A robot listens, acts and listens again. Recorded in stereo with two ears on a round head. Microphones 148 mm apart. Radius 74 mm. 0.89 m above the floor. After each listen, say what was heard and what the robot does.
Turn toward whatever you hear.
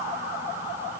Keep listening.
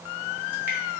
Keep listening.
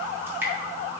Turn 30° right.
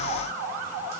Keep listening.
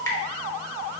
So it is at 20° left. Turn 20° left.
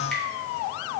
Keep listening.
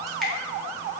Keep listening.
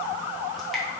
Facing where the dripping came from. I can't hear it now.